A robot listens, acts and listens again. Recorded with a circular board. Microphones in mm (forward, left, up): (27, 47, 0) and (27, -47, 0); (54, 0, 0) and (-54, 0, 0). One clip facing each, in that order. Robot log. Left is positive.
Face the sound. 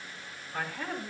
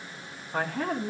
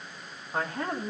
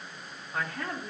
note: The man speaking: 65° right.
cmd yaw -65
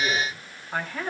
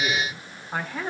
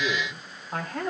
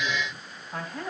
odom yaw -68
note: The man speaking is now 15° right.
cmd yaw -15
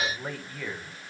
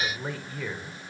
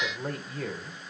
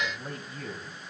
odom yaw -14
note: The man speaking is now 10° right.
cmd yaw -10
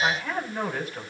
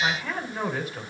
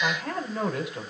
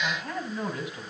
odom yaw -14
end: Found it: a man speaking, straight ahead.